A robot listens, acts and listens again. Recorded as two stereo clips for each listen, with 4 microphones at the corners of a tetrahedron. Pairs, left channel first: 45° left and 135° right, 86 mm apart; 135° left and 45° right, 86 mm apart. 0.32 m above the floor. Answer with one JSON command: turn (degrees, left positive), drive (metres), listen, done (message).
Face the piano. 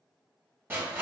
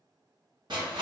{"listen": true}
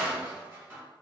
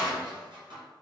{"listen": true}
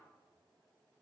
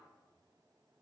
{"done": "I can't make out a piano to turn to."}